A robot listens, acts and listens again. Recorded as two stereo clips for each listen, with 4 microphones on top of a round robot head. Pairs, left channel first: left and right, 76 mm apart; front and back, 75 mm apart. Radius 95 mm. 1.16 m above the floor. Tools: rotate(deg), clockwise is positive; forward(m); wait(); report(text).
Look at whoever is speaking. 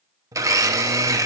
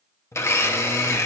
wait()
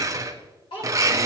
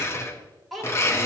rotate(-90)
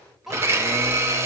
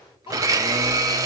report("Found it: a child speaking, straight ahead, 2 to 4 m away.")